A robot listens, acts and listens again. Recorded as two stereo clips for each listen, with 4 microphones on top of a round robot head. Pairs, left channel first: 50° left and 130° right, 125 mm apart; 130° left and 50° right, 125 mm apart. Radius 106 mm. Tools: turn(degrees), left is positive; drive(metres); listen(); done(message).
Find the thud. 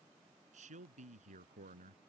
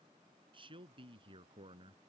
listen()
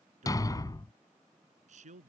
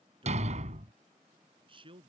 turn(degrees=-15)
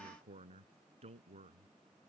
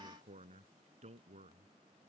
done("Facing where the thud came from. I can't hear it now.")